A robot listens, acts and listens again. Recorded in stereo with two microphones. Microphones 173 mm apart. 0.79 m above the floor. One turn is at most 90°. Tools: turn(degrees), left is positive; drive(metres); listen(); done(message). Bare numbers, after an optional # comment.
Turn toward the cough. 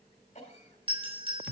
# The cough: about 40° left or 140° left.
turn(40)
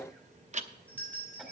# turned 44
listen()
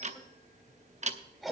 done("Found it: a cough, straight ahead.")